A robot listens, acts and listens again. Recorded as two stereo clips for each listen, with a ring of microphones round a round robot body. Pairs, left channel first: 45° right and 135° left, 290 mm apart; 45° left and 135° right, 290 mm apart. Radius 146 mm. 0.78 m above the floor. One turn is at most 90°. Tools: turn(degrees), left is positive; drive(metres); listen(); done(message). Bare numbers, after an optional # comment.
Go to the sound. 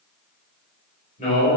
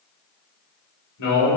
# The man speaking: 20° left.
turn(20)
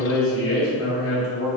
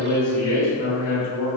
drive(1.0)
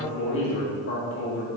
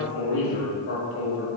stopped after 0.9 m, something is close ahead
done("I am next to the man speaking.")